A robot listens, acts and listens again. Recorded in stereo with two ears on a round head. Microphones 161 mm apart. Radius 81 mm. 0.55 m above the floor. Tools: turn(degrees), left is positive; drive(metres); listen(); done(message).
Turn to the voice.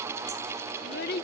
turn(degrees=60)
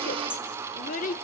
turn(degrees=50)
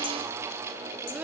listen()
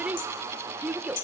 turn(degrees=-10)
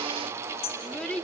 done("Facing the child speaking.")